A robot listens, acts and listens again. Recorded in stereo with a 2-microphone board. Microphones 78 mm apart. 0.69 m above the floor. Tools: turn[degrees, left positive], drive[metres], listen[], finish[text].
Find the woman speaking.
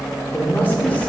Thought: The woman speaking: about 20° left or 160° left.
Action: turn[20]
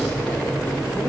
Action: listen[]
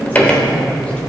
Action: listen[]
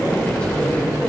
Action: turn[30]
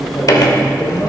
Action: listen[]
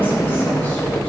Action: listen[]
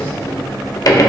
Action: finish[I heard a woman speaking, but can't make it out now. It was about 25° right or 145° left.]